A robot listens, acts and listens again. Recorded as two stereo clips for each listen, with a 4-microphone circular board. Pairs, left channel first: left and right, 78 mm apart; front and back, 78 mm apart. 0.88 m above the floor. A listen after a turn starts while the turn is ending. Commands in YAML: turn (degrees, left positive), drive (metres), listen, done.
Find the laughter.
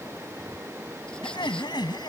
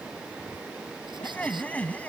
turn: 70
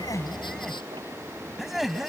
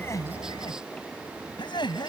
done: "Found it: laughter, straight ahead."